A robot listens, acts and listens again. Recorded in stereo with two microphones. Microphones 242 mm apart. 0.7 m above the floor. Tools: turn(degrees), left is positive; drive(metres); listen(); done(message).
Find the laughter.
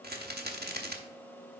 listen()
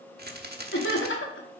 turn(degrees=55)
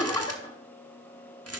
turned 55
turn(degrees=20)
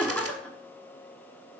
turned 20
done("Facing the laughter, 1 to 2 m away.")